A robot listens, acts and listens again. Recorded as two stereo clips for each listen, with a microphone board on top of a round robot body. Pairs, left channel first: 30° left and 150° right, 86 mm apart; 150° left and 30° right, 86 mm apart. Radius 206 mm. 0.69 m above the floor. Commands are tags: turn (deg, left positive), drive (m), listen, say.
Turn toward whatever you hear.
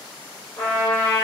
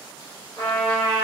<turn deg="85"/>
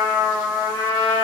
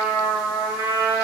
<say>Found it: a trumpet, straight ahead, 1 to 2 m away.</say>